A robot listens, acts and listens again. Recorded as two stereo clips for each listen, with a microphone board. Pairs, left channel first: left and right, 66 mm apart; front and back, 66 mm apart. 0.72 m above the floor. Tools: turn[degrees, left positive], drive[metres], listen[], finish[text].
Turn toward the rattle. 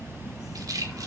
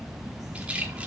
Thought: The rattle: 110° right.
Action: turn[-110]
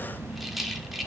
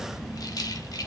Action: finish[Found it: a rattle, straight ahead, 1 to 2 m away.]